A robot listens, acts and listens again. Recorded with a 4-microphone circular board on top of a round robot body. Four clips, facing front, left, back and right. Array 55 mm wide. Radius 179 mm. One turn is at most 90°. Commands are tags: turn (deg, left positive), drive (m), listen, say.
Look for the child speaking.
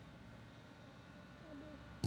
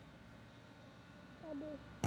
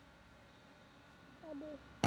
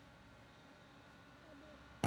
<turn deg="90"/>
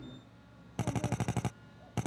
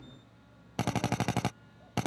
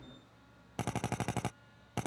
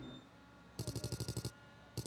<turn deg="40"/>
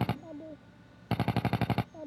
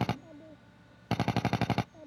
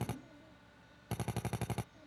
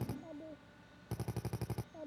<turn deg="-15"/>
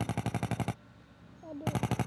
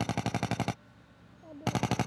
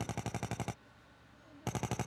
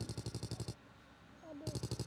<say>Facing the child speaking.</say>